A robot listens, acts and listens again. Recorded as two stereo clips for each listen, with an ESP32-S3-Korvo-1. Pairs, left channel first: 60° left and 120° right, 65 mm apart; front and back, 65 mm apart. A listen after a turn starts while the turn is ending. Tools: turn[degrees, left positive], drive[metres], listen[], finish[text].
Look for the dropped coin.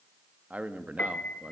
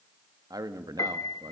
Action: listen[]
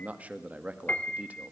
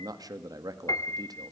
Action: listen[]
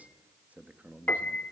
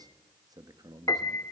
Action: finish[I can't make out a dropped coin, only a piano and a man speaking.]